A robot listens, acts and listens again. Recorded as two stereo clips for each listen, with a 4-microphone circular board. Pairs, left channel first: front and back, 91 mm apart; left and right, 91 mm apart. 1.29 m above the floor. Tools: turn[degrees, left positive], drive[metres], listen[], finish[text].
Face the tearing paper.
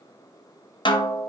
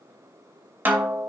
Action: listen[]
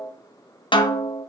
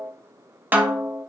Action: listen[]
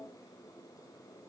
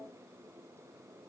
Action: finish[I can't make out tearing paper, only a snare drum.]